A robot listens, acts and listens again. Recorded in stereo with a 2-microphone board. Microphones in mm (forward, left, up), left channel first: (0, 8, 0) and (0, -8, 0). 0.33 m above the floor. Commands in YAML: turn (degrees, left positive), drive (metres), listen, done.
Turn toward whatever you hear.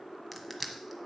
turn: 30
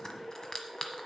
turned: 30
turn: 135
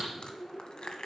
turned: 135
turn: 65
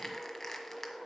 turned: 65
turn: 15
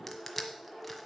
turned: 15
done: "Found it: crushing, straight ahead, 1 to 2 m away."